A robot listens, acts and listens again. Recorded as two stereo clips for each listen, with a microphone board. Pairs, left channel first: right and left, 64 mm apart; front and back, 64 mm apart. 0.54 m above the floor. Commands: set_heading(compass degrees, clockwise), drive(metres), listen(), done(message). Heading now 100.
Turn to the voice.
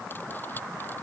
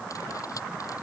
listen()
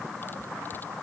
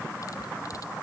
listen()
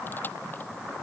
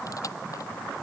done("I can't make out anyone speaking.")